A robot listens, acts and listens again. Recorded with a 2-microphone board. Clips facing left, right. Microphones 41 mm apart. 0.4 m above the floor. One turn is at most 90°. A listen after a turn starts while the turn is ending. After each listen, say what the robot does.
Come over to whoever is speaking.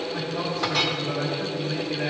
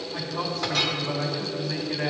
Turn 55° right.
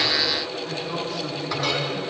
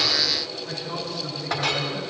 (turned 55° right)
Drive 1.0 m forward.
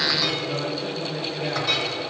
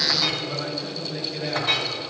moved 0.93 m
Drive 1.0 m forward.
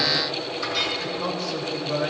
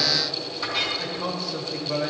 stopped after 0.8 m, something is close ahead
I am next to the man speaking.